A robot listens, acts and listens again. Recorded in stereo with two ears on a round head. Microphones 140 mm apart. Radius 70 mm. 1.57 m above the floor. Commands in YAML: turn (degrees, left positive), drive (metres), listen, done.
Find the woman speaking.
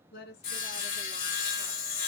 turn: 70
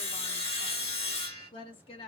turn: 40
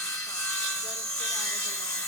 listen: true
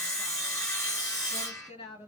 turn: 35
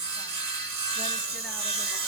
listen: true
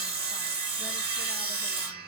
listen: true
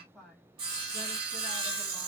done: "Found it: a woman speaking, straight ahead."